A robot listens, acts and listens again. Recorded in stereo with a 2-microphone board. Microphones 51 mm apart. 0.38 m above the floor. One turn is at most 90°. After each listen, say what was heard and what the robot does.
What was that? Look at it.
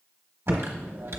The typing on a keyboard: about 70° right or 110° right. Turn 70° right.
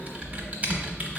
So it is at 35° right. Turn 35° right.
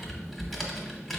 Facing the typing on a keyboard.